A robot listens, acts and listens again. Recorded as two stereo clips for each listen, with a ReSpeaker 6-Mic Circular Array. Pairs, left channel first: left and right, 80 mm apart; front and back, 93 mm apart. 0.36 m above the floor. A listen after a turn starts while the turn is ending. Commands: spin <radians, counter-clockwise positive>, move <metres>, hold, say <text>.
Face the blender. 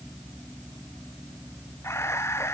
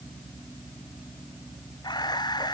hold
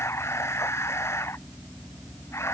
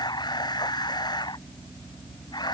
hold
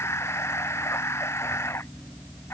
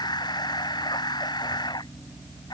say I can't make out a blender to turn to.